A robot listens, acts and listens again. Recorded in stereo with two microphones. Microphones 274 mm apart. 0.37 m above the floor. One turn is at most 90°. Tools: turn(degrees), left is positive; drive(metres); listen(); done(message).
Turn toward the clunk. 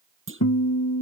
turn(degrees=-45)
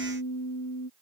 listen()
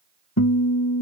done("I heard a clunk, but can't make it out now. It was about straight ahead or 90° right.")